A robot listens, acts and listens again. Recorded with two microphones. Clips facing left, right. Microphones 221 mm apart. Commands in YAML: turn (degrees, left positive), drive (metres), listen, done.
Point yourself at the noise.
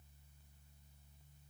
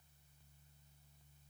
listen: true
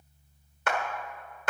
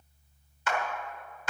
turn: 60
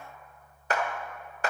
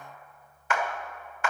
turn: 40
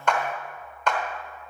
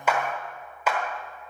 turn: -10
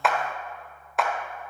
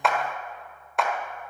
done: "Found it: a clap, straight ahead, 1 to 2 m away."